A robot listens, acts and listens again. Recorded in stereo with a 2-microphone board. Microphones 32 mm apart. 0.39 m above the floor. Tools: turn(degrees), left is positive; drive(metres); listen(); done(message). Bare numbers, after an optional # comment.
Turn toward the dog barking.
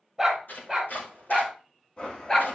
# The dog barking: about 20° left or 160° left.
turn(20)
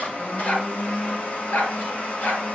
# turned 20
# So it is at 95° left.
turn(95)
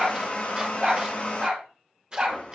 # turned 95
# The dog barking is now 25° right.
turn(-25)
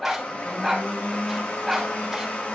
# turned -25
done("Facing the dog barking, 2 to 4 m away.")